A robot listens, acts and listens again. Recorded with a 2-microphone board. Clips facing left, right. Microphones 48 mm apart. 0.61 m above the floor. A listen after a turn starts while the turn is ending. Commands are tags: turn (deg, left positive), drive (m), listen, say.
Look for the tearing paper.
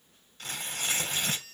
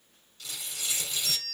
<turn deg="50"/>
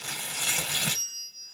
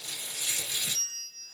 <turn deg="80"/>
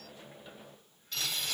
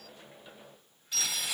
<turn deg="-10"/>
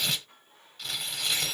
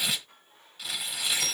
<say>Facing the tearing paper, under 1 m away.</say>